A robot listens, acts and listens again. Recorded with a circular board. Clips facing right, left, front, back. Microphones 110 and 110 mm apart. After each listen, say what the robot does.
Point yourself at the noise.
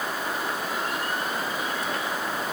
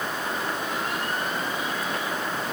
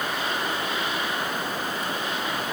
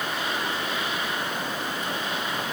Keep listening.
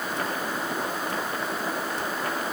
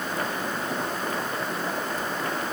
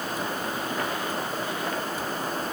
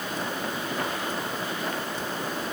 Keep listening.
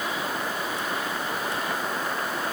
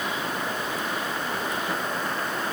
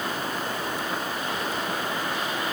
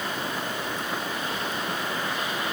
I can't make out anything to turn to.